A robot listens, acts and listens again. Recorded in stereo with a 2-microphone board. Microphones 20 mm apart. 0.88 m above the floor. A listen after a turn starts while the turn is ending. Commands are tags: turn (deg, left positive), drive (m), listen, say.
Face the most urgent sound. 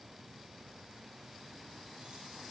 <listen/>
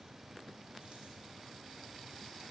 <listen/>
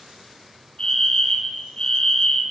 <turn deg="50"/>
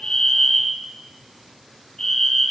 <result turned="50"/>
<turn deg="10"/>
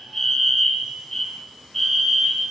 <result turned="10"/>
<say>Found it: a fire alarm, straight ahead.</say>